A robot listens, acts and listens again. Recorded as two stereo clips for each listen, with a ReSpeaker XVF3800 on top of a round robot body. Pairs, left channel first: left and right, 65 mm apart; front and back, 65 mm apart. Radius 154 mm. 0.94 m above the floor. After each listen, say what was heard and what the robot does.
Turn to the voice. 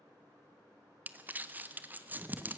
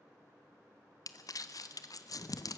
Keep listening.
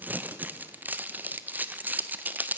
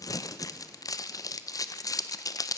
Keep listening.
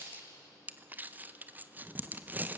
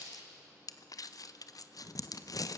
I can't make out anyone speaking to turn to.